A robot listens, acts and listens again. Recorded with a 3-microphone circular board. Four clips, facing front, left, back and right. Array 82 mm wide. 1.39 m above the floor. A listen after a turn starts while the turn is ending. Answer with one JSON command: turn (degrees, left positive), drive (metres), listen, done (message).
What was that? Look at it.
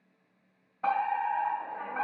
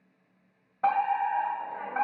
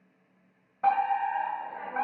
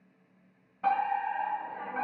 {"turn": 110}
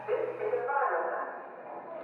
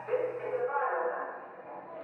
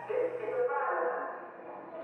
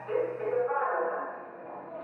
{"turn": -15}
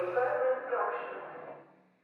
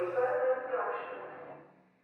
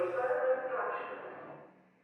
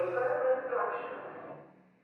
{"done": "Found it: a fire alarm, straight ahead, 2 to 4 m away."}